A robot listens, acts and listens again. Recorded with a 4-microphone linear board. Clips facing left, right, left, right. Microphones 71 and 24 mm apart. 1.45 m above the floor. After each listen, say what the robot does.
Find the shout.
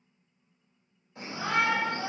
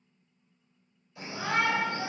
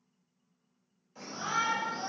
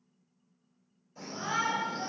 Turn 40° left.
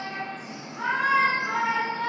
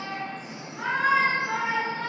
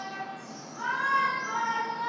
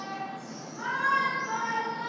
Facing the shout.